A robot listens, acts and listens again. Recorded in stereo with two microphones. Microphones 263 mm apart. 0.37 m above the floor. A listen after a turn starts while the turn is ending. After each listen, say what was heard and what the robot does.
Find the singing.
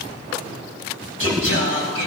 The singing: about 55° left or 125° left. Turn 55° left.
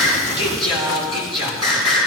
So it is at 70° left. Turn 70° left.
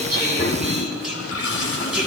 Found it: singing, straight ahead, over 4 m away.